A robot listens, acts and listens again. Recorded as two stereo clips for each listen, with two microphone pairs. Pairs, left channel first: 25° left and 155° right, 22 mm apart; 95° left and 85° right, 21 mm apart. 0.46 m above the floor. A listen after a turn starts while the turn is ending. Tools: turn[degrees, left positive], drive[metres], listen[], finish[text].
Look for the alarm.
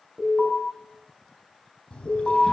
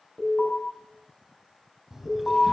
Thought: The alarm: 120° left.
Action: turn[120]
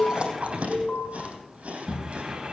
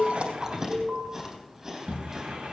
Thought: The alarm is now 20° right.
Action: turn[-20]
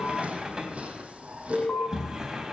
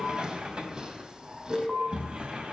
Action: finish[Found it: an alarm, straight ahead, over 4 m away.]